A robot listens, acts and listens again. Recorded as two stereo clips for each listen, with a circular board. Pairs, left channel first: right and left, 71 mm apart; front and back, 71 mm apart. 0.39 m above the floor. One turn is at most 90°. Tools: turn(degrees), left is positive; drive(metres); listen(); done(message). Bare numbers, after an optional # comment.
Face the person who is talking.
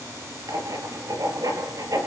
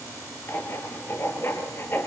listen()
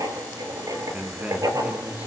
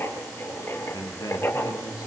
# The man speaking: 20° left.
turn(20)
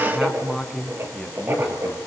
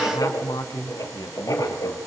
done("Found it: a man speaking, straight ahead, 2 to 4 m away.")